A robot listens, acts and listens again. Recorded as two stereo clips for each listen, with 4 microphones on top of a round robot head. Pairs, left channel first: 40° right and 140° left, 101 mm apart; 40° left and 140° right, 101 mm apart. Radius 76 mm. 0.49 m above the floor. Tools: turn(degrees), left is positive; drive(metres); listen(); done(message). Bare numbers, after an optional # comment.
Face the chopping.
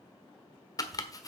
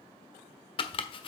# The chopping: 10° left.
turn(10)
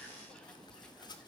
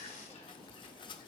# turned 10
listen()
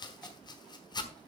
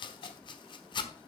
done("Facing the chopping.")